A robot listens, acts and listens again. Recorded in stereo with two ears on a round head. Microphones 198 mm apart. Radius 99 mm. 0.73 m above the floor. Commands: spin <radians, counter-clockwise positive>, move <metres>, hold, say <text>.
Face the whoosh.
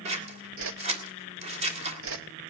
spin -1.13
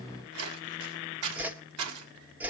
spin -0.17
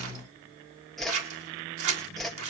say Found it: a whoosh, straight ahead.